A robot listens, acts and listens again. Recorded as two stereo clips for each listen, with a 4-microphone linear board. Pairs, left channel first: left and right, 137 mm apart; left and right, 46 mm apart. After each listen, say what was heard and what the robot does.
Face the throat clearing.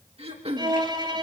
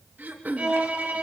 The throat clearing: about 45° right or 135° right. Turn 45° right.
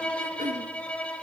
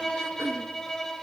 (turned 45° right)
Keep listening.
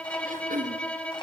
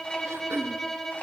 So it is at 90° right. Turn 90° right.
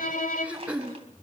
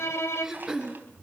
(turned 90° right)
The throat clearing is now 10° right. Turn 10° right.
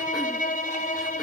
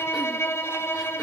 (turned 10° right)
Keep listening.
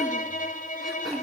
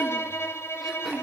Keep listening.
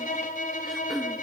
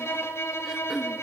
Facing the throat clearing.